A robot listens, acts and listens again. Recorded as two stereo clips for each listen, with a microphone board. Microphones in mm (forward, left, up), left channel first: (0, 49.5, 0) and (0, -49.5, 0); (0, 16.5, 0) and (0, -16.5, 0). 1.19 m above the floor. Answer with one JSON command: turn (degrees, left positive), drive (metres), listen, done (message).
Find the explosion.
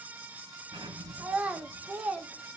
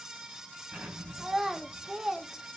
{"turn": -65}
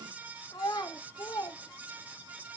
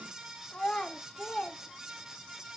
{"listen": true}
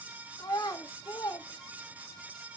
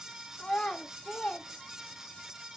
{"done": "I heard an explosion, but can't make it out now. It was about straight ahead or 50° right."}